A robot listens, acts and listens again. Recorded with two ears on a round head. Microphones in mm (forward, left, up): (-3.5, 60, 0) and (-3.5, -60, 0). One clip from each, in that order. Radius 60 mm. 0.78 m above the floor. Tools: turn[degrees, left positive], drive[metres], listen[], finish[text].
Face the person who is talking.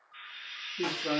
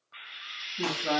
Thought: The man speaking: about 20° right or 160° right.
Action: turn[-20]
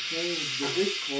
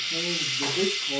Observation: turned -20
Action: finish[Found it: a man speaking, straight ahead.]